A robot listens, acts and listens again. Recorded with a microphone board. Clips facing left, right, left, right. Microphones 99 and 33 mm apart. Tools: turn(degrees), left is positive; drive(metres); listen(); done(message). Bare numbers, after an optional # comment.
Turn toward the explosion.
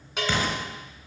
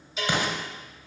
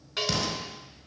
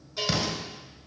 # The explosion: about 15° right or 165° right.
turn(-15)
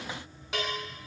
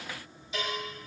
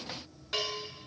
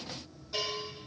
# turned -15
listen()
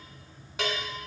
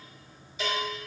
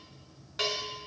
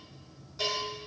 done("I heard an explosion, but can't make it out now. It was about straight ahead or 150° right.")